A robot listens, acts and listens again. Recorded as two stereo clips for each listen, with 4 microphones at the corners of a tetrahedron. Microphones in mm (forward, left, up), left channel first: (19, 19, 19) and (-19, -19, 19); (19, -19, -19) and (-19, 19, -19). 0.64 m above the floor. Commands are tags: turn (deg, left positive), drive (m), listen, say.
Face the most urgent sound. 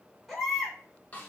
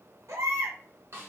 <turn deg="135"/>
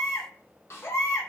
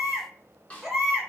<turn deg="50"/>
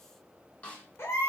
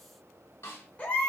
<turn deg="15"/>
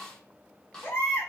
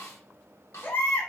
<say>Facing the baby crying, 1 to 2 m away.</say>